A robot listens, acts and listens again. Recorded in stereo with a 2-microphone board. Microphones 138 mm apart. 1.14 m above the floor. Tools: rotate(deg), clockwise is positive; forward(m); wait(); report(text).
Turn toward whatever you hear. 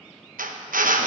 rotate(90)
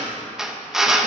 report("Found it: a drill, straight ahead.")